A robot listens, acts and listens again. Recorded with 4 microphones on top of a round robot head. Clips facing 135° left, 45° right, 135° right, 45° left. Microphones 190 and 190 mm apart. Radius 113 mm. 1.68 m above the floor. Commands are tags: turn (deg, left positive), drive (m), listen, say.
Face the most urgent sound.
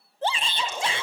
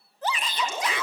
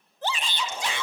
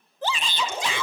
<turn deg="70"/>
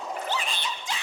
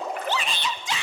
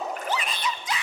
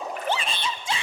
<turn deg="-20"/>
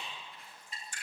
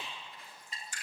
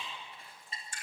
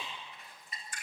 <listen/>
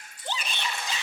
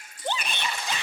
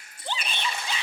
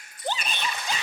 <say>Found it: a shout, straight ahead.</say>